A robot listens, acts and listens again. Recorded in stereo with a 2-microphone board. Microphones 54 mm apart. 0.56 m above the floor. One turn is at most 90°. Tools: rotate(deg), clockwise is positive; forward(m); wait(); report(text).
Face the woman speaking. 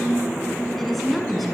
rotate(-30)
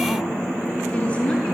rotate(-90)
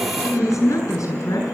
rotate(-75)
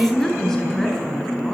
rotate(-10)
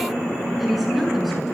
report("Facing the woman speaking, over 4 m away.")